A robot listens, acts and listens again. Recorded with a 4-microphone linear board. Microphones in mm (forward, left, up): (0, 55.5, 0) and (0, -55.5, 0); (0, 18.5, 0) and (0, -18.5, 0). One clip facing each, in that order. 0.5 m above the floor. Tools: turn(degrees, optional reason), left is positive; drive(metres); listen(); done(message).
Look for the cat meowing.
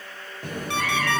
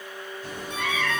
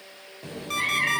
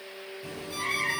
turn(degrees=50, reason="The cat meowing: about 50° left or 130° left.")
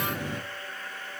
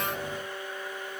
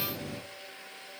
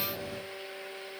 turn(degrees=80, reason="So it is at 80° left.")
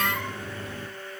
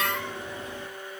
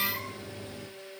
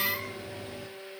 turn(degrees=-20, reason="The cat meowing is now 20° right.")
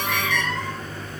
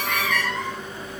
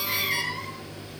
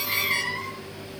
done("Found it: a cat meowing, straight ahead.")